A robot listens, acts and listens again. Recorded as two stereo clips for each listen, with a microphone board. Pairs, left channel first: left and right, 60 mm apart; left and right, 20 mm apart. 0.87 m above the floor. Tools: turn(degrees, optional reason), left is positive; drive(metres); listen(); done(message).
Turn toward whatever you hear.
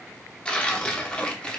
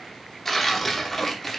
turn(degrees=15, reason="The tearing paper: about 15° left or 165° left.")
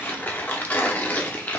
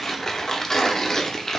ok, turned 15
turn(degrees=150, reason="So it is at 150° left.")
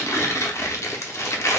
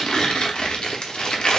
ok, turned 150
turn(degrees=55, reason="The tearing paper is now 55° left.")
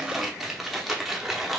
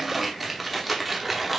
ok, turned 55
done("Facing the tearing paper, under 1 m away.")